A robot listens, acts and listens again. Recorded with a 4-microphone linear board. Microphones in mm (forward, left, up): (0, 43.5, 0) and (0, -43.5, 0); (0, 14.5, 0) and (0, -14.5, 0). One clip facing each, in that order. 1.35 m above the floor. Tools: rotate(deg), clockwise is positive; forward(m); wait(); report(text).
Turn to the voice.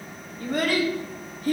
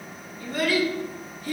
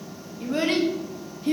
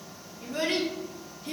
rotate(-45)
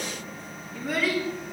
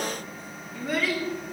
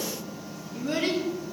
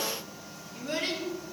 report("Found it: a child speaking, straight ahead, 1 to 2 m away.")